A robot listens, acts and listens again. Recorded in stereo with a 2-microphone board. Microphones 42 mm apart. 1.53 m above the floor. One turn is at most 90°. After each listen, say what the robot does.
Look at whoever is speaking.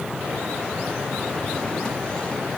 Keep listening.
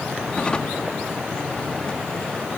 Keep listening.
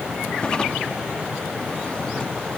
I can't make out anyone speaking, only a drawer.